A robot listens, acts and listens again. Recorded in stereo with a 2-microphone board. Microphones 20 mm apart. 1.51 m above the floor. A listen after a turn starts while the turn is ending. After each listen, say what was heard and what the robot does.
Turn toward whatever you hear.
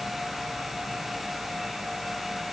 Keep listening.
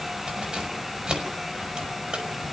The keys jangling: about 45° right or 135° right. Turn 45° right.
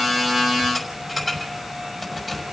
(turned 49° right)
Facing the keys jangling.